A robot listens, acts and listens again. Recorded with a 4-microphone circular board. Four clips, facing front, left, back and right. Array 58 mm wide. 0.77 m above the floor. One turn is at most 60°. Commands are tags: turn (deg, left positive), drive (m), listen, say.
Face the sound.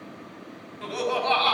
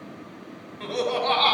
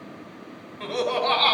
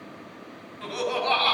<turn deg="60"/>
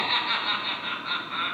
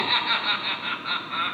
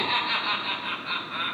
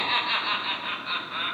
<turn deg="55"/>
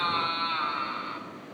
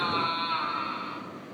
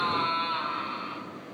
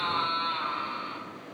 <say>Facing the laughter.</say>